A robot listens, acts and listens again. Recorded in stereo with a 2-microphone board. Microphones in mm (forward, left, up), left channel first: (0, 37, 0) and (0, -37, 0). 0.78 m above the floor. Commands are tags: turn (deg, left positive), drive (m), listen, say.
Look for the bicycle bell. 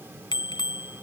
<turn deg="90"/>
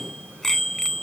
<say>Found it: a bicycle bell, straight ahead.</say>